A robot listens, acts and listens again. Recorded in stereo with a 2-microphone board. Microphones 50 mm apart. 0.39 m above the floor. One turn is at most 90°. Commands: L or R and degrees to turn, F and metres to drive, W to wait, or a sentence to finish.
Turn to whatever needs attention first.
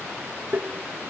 W
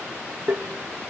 W
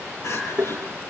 L65
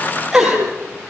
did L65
Found it: crying, straight ahead, over 4 m away.